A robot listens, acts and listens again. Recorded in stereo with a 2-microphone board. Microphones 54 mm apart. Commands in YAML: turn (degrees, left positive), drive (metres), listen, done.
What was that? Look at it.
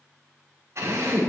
turn: -70
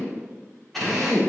done: "Found it: a drill, straight ahead, over 4 m away."